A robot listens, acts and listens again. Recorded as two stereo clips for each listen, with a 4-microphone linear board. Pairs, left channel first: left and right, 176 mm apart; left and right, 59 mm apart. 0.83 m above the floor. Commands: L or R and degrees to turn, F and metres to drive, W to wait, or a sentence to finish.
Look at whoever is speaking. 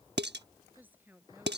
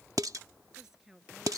R30
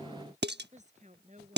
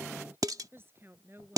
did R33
R140
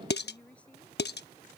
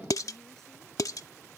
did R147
L10
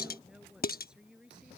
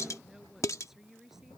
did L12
Found it: a woman speaking, straight ahead.